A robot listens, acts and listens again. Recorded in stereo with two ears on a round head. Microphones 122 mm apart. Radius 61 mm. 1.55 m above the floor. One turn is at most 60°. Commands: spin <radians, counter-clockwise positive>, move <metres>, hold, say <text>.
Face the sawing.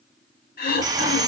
spin -0.44
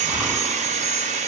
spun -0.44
spin -1.05
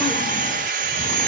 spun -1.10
spin -1.05
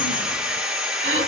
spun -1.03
say Found it: sawing, straight ahead.